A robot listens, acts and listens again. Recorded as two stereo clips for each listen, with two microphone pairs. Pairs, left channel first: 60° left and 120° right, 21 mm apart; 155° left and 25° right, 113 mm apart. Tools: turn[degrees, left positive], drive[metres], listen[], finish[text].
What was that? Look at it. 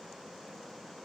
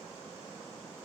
Action: listen[]
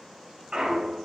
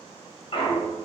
Thought: The clunk: 175° right.
Action: turn[-175]
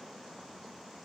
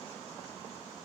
Action: finish[I heard a clunk from this way, but can't make it out now.]